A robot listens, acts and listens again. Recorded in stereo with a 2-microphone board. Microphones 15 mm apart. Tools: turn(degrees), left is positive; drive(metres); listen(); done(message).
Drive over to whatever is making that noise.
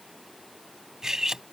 turn(degrees=-35)
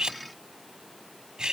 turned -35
turn(degrees=-110)
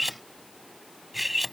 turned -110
turn(degrees=-10)
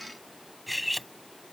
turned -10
drive(metres=1.0)
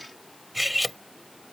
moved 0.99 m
turn(degrees=-10)
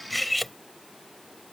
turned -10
drive(metres=1.0)
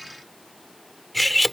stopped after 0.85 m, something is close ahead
done("Arrived at the cutlery clinking, straight ahead.")